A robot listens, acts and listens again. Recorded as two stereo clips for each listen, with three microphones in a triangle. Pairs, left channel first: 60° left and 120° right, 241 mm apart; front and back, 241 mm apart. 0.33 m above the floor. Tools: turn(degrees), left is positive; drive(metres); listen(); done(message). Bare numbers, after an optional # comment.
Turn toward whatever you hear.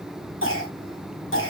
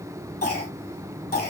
# The cough: 40° left.
turn(40)
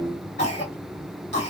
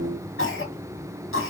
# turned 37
done("Found it: a cough, straight ahead.")